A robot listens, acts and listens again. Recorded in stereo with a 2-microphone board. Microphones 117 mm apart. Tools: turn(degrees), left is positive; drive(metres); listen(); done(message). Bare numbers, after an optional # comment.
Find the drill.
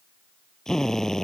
turn(30)
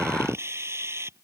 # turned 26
# So it is at 20° right.
turn(-20)
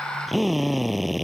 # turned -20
done("Facing the drill.")